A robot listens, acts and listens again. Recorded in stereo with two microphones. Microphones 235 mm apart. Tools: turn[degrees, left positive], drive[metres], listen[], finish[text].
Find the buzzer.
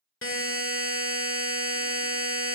Thought: The buzzer: about 60° left or 120° left.
Action: turn[60]
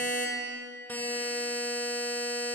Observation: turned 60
Thought: So it is at 10° left.
Action: turn[10]
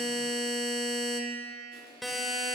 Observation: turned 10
Action: finish[Facing the buzzer, 1 to 2 m away.]